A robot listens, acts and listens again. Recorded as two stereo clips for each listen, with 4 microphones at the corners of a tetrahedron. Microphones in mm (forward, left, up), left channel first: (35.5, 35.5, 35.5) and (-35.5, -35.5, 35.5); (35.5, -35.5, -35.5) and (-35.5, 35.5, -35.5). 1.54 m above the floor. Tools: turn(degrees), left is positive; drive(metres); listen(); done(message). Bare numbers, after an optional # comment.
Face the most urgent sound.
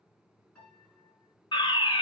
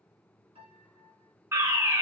# The fire alarm: 80° left.
turn(80)
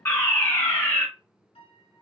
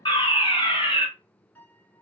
# The fire alarm is now 15° right.
turn(-15)
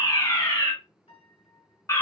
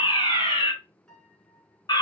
# The fire alarm is now 10° right.
turn(-10)
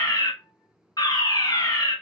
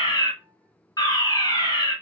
done("Facing the fire alarm.")